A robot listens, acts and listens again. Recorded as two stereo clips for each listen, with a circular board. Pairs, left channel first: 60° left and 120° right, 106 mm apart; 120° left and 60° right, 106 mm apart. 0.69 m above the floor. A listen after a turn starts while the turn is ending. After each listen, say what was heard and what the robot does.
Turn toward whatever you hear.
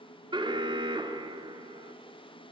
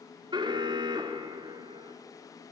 The alarm: 90° right. Turn 90° right.
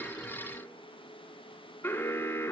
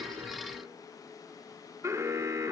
Found it: an alarm, straight ahead.